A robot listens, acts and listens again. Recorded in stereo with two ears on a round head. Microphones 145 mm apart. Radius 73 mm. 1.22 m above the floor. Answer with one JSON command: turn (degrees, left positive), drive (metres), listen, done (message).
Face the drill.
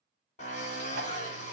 {"turn": 45}
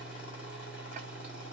{"listen": true}
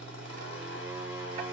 {"turn": 90}
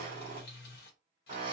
{"turn": -30}
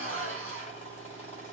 {"turn": -10}
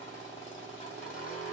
{"done": "Found it: a drill, straight ahead, 2 to 4 m away."}